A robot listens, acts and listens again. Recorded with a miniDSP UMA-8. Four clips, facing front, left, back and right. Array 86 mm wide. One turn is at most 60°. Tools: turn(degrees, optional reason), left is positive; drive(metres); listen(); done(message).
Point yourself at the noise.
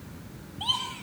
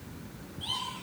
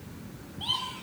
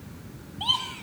turn(degrees=-60, reason="The laughter: 65° right.")
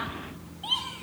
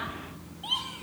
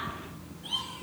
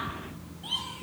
turn(degrees=30, reason="The laughter is now 30° left.")
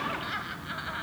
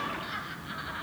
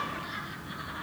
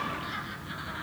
turn(degrees=15, reason="The laughter is now 15° left.")
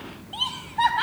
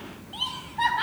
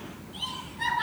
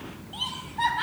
turn(degrees=10, reason="The laughter is now 10° left.")
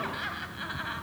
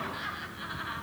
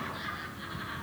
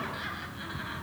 done("Found it: laughter, straight ahead.")